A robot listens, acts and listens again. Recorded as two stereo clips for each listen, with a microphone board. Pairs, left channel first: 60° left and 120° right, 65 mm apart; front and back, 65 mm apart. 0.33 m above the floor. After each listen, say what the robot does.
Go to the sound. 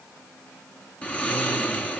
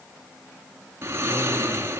Turn 130° left.
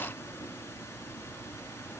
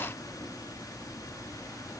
Turn 10° left.
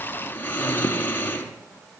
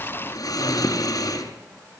Drive 1.0 m forward.
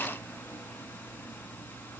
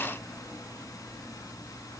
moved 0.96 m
Drive 1.0 m forward.
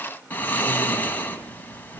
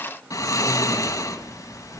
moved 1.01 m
Drive 1.0 m forward.
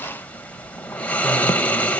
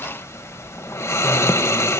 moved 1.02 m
Drive 1.0 m forward.
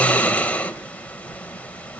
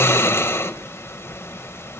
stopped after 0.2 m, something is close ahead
Arrived at the snoring, straight ahead.